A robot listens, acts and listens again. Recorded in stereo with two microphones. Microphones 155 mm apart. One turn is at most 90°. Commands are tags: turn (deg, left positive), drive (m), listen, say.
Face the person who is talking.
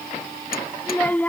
<turn deg="30"/>
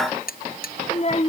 <turn deg="90"/>
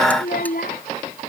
<turn deg="70"/>
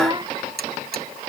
<turn deg="-30"/>
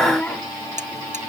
<turn deg="10"/>
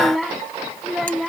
<say>Facing the child speaking.</say>